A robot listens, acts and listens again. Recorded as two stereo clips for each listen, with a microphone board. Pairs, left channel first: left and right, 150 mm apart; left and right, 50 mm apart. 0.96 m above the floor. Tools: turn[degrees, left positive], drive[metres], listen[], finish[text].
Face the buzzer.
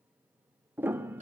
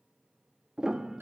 Action: listen[]
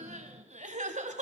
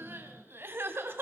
Action: listen[]
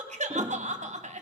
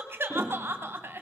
Action: finish[I can't make out a buzzer, only a piano and crying.]